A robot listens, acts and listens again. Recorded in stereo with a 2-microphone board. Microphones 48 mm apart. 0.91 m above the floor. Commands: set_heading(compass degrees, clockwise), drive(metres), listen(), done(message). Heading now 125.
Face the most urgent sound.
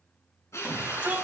set_heading(160)
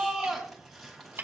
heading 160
done("Found it: a shout, straight ahead, over 4 m away.")